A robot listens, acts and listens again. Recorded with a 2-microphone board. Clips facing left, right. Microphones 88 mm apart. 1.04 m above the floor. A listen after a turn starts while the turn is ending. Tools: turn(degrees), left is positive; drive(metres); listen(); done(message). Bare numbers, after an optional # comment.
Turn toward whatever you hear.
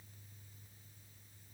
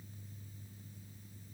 listen()
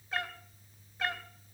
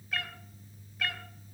# The cat meowing: about 25° left or 155° left.
turn(25)
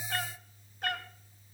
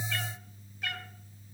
# So it is at 130° left.
turn(130)
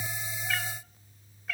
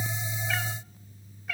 done("Found it: a cat meowing, straight ahead.")